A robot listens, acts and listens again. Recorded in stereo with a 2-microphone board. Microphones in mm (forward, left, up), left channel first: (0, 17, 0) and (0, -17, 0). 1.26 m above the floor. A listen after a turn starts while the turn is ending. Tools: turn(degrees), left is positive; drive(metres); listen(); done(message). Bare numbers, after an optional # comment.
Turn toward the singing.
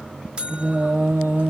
# The singing: about 75° right or 105° right.
turn(-75)
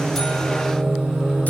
# So it is at 25° right.
turn(-25)
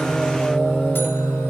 # The singing is now 15° left.
turn(15)
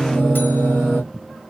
done("Found it: singing, straight ahead.")